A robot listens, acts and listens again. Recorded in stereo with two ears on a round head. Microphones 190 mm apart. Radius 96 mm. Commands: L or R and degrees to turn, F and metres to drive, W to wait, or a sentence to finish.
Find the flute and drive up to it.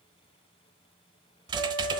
R70
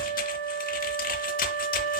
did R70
R40
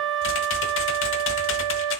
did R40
F1.0
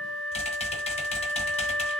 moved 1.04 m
F1.0
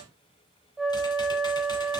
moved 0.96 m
F1.0
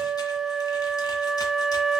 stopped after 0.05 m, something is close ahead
I am next to the flute.